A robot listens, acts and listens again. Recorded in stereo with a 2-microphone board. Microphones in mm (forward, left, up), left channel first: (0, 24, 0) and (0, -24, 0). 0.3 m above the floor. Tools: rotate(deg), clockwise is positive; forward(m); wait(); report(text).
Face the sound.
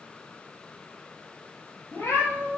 rotate(-70)
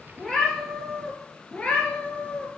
rotate(-25)
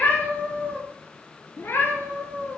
rotate(-55)
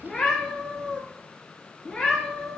rotate(-10)
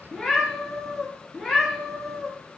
report("Found it: a cat meowing, straight ahead, 1 to 2 m away.")